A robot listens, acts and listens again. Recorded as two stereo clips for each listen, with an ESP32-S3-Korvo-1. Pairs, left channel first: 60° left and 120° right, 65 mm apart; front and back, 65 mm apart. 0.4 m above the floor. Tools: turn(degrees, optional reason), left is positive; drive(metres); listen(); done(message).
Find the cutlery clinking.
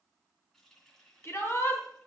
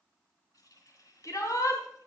listen()
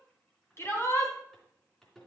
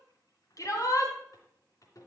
listen()
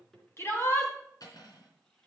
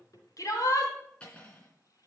turn(degrees=70, reason="The cutlery clinking: 70° left.")
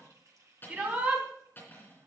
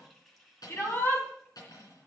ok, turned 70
done("Found it: cutlery clinking, straight ahead, 2 to 4 m away.")